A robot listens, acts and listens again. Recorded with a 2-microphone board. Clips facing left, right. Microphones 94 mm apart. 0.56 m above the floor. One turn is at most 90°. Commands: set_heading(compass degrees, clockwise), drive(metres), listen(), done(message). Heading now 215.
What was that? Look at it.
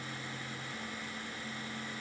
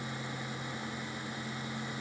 listen()
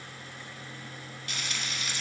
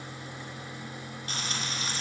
set_heading(250)
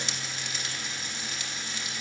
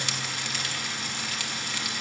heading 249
set_heading(339)
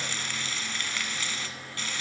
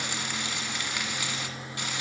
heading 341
set_heading(356)
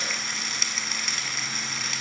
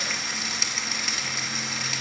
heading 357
done("Facing the frying, 1 to 2 m away.")